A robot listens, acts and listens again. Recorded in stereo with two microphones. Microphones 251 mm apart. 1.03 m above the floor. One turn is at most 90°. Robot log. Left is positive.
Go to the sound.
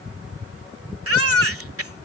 note: The baby crying: about 65° right or 115° right.
cmd yaw -65
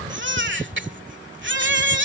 note: So it is at 50° right.
cmd yaw -50
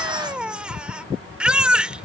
cmd fwd 1.0
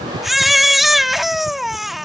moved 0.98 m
cmd fwd 1.0
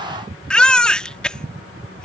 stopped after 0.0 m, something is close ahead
end: I am next to the baby crying.